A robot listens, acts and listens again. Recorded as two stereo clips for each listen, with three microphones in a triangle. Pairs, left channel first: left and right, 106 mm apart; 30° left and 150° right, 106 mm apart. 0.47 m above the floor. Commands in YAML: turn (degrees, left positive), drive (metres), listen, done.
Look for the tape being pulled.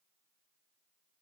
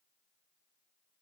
listen: true
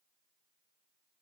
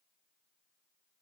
listen: true
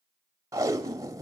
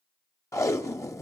turn: -30
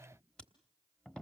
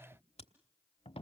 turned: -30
turn: 10
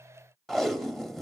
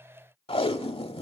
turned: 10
done: "Found it: tape being pulled, straight ahead, 1 to 2 m away."